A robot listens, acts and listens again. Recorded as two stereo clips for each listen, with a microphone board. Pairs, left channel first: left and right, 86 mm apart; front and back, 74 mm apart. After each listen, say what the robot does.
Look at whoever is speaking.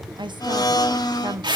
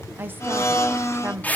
Turn 120° right.
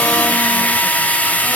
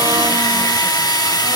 Keep listening.
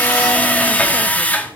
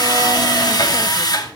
Keep listening.
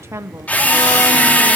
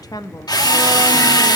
Turn 35° right.
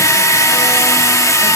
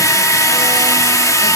Keep listening.
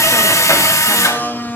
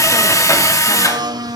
Keep listening.
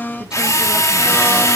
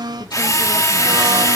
I heard a woman speaking from this way, but can't make it out now.